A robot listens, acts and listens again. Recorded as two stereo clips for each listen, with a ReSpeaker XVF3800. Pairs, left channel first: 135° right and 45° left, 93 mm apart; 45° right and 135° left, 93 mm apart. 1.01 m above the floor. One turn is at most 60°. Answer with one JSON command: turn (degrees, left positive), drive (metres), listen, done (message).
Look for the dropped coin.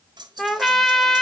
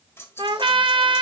{"turn": 15}
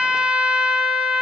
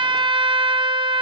{"done": "Facing where the dropped coin came from. I can't hear it now."}